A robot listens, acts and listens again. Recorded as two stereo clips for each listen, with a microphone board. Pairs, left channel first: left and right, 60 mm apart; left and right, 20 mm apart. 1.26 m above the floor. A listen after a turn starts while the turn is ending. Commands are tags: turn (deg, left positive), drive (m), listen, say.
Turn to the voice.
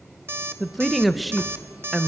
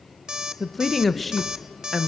<turn deg="30"/>
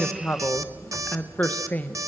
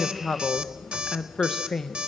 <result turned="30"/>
<turn deg="150"/>
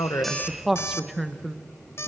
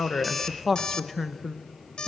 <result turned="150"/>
<say>Facing the woman speaking.</say>